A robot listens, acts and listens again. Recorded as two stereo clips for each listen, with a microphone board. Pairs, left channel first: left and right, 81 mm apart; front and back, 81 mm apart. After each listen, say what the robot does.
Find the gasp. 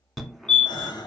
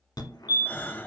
Turn 65° left.
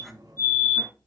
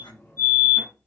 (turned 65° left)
Facing where the gasp came from. I can't hear it now.